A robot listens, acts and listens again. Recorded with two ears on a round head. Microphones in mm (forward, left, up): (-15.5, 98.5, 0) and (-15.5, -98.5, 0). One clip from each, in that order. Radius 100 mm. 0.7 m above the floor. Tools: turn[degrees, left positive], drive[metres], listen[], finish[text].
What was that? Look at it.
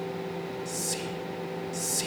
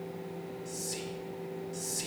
Thought: The whispering: about 20° left or 160° left.
Action: turn[20]
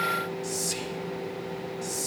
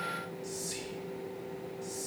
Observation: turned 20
Thought: So it is at 135° left.
Action: turn[135]
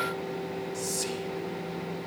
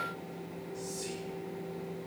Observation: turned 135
Thought: The whispering is now 50° left.
Action: turn[50]
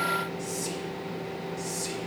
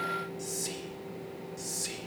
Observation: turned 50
Thought: The whispering is now 10° right.
Action: turn[-10]
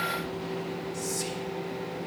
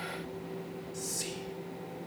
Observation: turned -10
Action: finish[Found it: whispering, straight ahead.]